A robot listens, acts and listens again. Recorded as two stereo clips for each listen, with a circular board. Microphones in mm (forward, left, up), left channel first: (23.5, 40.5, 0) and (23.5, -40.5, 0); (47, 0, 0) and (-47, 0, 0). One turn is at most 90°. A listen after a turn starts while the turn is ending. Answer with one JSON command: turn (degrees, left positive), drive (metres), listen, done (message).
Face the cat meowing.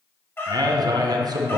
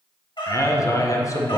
{"turn": 25}
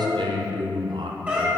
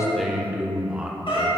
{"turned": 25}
{"turn": -20}
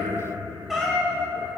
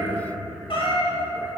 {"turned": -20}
{"done": "Found it: a cat meowing, straight ahead."}